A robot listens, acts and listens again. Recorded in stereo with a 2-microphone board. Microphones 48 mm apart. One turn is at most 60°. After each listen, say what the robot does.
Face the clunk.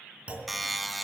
Turn 30° right.
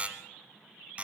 Keep listening.
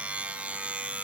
I heard a clunk, but can't make it out now. It was about straight ahead or 120° right.